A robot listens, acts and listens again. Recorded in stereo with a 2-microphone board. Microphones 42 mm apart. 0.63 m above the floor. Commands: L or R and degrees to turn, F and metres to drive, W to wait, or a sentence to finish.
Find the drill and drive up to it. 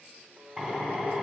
R30
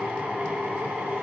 R140
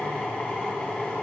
L25
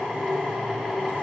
R10
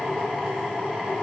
F1.0
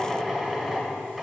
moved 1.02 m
F1.0
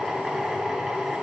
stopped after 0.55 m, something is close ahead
R15
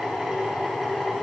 Arrived at the drill, straight ahead.